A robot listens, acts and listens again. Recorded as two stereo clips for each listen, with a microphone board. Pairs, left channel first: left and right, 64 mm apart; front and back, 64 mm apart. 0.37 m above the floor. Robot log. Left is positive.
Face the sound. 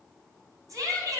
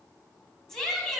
note: The shout: 80° right.
cmd yaw -80
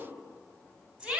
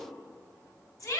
note: The shout is now 15° right.
cmd yaw -15
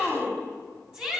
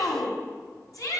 note: The shout is now 10° right.
cmd yaw -10
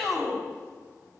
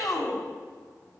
end: Facing the shout, 2 to 4 m away.